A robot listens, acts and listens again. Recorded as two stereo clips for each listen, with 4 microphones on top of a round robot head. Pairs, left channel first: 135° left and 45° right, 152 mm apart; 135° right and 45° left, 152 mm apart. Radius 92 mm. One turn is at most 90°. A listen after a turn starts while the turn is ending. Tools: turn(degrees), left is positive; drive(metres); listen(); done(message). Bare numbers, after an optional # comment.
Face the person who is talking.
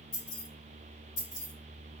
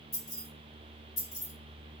listen()
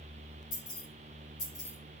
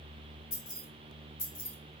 listen()
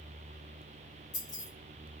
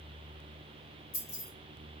done("I can't make out anyone speaking to turn to.")